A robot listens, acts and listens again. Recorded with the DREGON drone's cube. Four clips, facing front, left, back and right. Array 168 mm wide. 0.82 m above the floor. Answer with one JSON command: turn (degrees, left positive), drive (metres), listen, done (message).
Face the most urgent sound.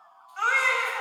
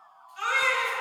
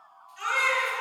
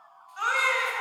{"turn": -30}
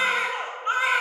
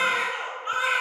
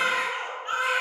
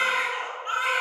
{"done": "Facing the baby crying."}